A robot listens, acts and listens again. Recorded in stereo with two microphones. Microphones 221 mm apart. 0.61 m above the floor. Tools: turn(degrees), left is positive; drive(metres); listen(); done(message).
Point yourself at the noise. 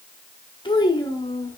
turn(degrees=30)
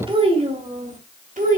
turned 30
turn(degrees=-40)
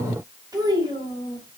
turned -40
turn(degrees=-20)
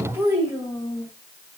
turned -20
turn(degrees=-15)
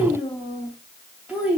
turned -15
done("Facing the child speaking, 2 to 4 m away.")